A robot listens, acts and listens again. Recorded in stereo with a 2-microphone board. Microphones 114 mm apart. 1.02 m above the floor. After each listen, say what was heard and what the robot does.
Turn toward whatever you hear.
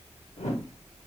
The whoosh: about 70° left or 110° left. Turn 70° left.
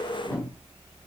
So it is at 25° left. Turn 25° left.
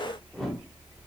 Facing the whoosh.